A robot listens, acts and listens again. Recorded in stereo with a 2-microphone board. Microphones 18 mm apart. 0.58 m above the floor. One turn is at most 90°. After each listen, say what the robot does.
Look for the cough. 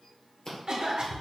Turn 65° right.
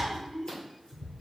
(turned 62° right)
Turn 15° right.
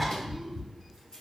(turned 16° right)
Keep listening.
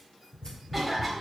Facing the cough, 1 to 2 m away.